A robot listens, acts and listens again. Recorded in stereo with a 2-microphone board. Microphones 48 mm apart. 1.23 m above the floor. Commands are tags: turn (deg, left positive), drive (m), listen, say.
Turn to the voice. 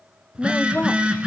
<turn deg="40"/>
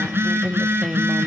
<say>Found it: a woman speaking, straight ahead, under 1 m away.</say>